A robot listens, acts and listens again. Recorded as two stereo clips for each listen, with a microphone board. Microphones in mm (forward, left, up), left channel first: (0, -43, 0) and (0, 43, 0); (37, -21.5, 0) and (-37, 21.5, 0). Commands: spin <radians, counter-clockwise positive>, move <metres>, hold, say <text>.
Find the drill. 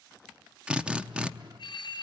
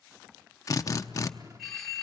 spin 0.26
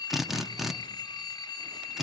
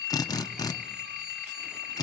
say Found it: a drill, straight ahead.